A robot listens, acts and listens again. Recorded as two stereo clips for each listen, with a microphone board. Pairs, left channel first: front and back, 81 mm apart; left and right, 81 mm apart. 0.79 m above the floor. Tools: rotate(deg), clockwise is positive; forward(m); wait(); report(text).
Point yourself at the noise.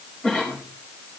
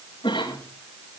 rotate(-75)
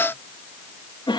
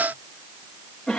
report("Found it: a cough, straight ahead, over 4 m away.")